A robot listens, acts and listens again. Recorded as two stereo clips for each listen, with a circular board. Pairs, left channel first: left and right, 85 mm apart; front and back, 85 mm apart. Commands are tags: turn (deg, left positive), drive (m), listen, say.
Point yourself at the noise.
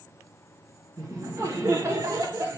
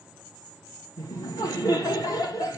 <turn deg="-40"/>
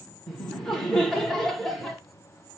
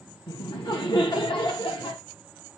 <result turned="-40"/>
<say>Found it: laughter, straight ahead, 1 to 2 m away.</say>